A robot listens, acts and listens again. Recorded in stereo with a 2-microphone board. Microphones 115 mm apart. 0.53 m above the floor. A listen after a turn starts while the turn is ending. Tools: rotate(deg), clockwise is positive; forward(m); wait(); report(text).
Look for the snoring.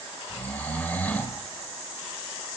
rotate(-30)
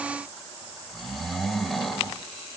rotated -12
report("Found it: snoring, straight ahead, 1 to 2 m away.")